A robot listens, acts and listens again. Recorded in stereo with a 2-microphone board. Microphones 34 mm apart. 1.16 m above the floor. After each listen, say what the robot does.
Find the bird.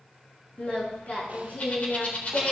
Turn 45° left.
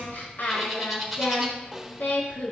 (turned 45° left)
Found it: a bird, straight ahead, over 4 m away.